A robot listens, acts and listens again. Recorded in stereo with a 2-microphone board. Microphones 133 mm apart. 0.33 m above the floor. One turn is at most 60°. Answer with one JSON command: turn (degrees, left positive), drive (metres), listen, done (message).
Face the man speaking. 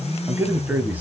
{"turn": -30}
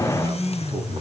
{"listen": true}
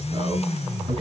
{"turn": -60}
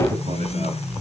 {"turn": -60}
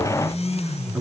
{"turn": -15}
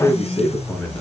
{"turn": 10}
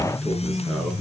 {"listen": true}
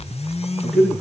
{"done": "Found it: a man speaking, straight ahead, 2 to 4 m away."}